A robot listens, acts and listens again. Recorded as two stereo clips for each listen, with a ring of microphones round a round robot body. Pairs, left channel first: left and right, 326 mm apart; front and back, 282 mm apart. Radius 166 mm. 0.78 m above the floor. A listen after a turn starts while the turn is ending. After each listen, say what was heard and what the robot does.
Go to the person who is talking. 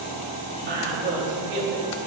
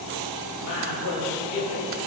The woman speaking: 30° right. Turn 30° right.
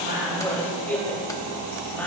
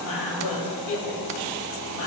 Drive 1.0 m forward.
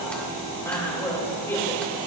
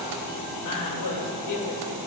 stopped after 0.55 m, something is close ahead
Blocked. The woman speaking is further on, straight ahead.